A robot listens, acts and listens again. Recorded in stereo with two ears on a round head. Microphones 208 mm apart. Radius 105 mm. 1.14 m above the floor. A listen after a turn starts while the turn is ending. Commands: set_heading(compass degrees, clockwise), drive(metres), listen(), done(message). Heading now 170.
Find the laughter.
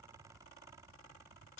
listen()
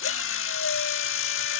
listen()
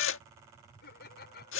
set_heading(130)
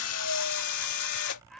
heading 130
listen()
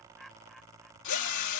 done("Found it: laughter, straight ahead.")